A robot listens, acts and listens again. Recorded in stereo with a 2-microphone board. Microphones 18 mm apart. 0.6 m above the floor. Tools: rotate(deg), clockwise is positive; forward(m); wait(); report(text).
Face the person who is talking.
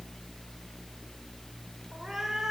wait()
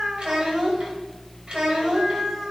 rotate(65)
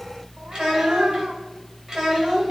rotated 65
rotate(45)
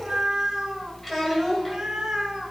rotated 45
report("Facing the child speaking.")